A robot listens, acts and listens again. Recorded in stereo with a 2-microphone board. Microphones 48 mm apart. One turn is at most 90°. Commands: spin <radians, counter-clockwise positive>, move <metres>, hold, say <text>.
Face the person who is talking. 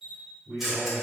spin -0.61
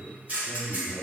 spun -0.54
spin -1.57
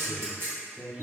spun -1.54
spin -0.35
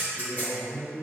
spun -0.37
say Facing the man speaking.